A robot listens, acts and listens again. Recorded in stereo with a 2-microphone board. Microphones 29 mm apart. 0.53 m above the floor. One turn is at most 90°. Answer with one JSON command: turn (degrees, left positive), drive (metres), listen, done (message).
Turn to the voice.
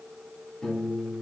{"listen": true}
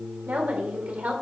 {"turn": -60}
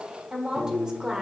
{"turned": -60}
{"turn": -25}
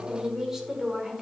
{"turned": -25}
{"turn": -15}
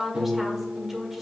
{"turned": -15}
{"done": "Facing the woman speaking, 1 to 2 m away."}